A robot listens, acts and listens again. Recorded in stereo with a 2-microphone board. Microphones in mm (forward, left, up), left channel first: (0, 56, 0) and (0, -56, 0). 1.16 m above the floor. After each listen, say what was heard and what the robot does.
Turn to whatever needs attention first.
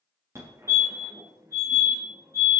The fire alarm: about 25° right or 155° right. Turn 25° right.
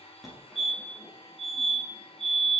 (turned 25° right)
Found it: a fire alarm, straight ahead.